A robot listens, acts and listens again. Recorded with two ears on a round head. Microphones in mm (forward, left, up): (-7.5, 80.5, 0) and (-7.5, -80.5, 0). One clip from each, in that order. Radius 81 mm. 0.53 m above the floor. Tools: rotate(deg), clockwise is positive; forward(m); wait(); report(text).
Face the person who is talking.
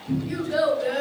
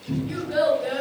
rotate(-30)
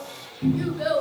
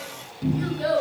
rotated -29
rotate(-135)
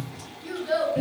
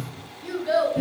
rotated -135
report("Facing the child speaking, 1 to 2 m away.")